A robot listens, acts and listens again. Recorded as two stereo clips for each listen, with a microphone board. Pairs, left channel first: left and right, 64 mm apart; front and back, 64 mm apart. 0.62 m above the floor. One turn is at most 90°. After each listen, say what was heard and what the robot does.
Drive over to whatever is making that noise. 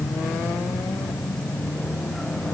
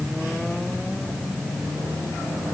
Keep listening.
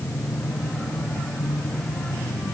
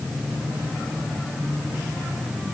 Keep listening.
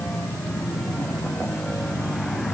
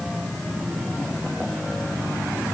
I can't make out anything to turn to.